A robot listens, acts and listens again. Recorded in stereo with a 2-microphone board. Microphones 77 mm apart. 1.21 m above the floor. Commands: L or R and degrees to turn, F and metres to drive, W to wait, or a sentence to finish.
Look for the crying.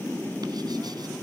W
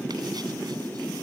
W
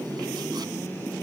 I can't make out crying.